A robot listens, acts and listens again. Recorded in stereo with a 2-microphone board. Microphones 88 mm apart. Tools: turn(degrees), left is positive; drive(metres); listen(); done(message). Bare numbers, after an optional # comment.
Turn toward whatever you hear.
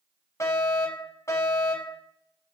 # The fire alarm: about 35° left or 145° left.
turn(35)
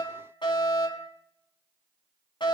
# So it is at 110° left.
turn(110)
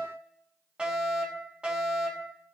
# The fire alarm is now 10° right.
turn(-10)
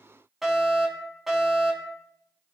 done("Found it: a fire alarm, straight ahead, over 4 m away.")